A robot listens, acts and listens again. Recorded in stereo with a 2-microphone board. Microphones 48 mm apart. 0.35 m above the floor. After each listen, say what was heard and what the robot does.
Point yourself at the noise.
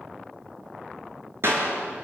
The clap: about 60° right or 120° right. Turn 60° right.
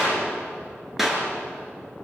Facing the clap, over 4 m away.